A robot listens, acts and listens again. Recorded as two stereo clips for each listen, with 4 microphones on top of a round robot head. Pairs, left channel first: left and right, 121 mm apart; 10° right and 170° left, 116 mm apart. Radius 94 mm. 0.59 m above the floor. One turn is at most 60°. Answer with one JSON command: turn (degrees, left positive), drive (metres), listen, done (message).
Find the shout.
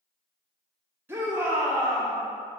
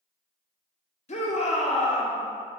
{"turn": -15}
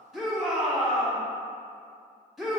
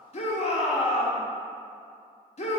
{"done": "Facing the shout."}